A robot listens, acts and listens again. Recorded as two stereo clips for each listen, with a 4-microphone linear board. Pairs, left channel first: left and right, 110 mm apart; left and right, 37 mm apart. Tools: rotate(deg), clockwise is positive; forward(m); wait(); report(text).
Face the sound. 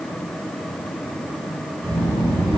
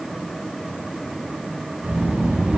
rotate(55)
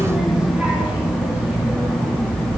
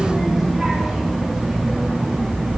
rotate(35)
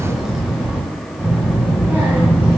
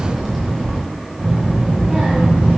rotate(20)
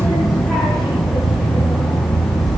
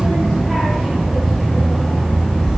report("Found it: a child speaking, straight ahead, 1 to 2 m away.")